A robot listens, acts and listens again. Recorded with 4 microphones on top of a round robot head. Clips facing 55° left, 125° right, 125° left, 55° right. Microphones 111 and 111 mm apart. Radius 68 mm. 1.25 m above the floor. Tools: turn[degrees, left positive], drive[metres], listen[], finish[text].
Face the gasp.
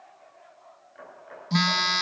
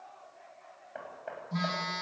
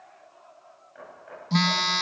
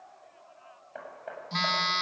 Action: listen[]
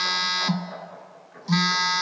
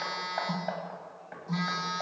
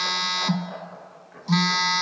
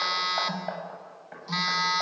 Action: listen[]
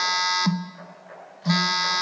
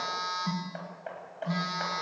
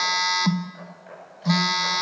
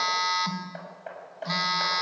Action: finish[I can't make out a gasp, only hammering and a phone buzzing.]